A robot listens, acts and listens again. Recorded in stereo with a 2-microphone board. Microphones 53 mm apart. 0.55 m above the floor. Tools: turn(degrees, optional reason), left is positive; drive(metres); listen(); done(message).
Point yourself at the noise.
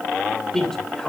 turn(degrees=30)
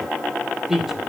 done("Found it: a man speaking, straight ahead, 2 to 4 m away.")